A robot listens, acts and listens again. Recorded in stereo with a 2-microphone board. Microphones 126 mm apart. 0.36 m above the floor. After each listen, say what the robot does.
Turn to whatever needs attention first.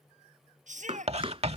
Turn 90° right.
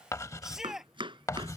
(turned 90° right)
Found it: a shout, straight ahead.